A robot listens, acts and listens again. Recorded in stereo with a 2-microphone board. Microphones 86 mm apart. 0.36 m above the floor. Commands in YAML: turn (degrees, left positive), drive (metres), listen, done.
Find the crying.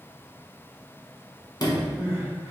turn: -35
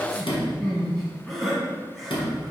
done: "Found it: crying, straight ahead."